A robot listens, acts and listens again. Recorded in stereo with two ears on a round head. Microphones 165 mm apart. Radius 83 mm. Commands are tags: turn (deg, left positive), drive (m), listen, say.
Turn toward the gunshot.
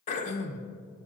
<listen/>
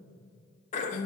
<listen/>
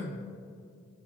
<say>I can't make out a gunshot to turn to.</say>